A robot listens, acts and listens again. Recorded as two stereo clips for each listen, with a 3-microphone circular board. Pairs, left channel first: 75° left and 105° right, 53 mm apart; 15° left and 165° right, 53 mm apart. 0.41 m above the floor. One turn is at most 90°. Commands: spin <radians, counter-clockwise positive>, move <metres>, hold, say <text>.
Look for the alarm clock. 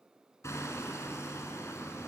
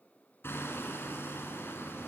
hold
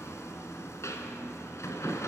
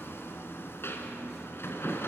hold
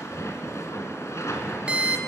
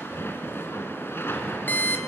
spin -0.61
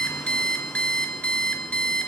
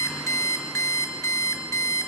say Found it: an alarm clock, straight ahead, 2 to 4 m away.